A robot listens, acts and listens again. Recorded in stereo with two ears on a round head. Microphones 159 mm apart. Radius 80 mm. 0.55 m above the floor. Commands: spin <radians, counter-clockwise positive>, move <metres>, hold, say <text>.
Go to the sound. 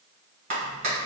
spin -0.70
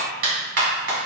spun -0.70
spin -1.75
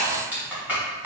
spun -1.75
spin -0.17
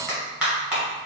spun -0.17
move 1.0
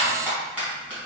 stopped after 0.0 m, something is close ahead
spin -0.17
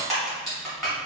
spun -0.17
say Blocked. The clap is further on, straight ahead.